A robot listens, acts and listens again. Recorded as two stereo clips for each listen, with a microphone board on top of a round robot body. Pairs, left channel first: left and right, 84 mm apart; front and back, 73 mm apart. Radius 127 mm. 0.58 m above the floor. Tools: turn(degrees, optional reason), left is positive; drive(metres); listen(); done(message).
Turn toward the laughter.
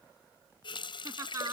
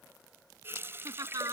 turn(degrees=-145, reason="The laughter: 145° right.")
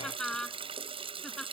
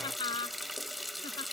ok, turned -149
done("Found it: laughter, straight ahead.")